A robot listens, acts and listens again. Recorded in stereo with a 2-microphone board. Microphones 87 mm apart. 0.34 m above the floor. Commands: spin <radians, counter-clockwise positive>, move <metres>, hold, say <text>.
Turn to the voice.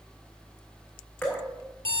hold
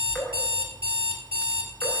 hold
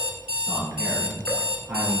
spin -0.26
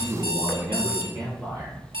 spin -0.52
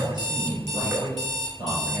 spin -2.09
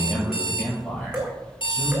say Facing the man speaking, over 4 m away.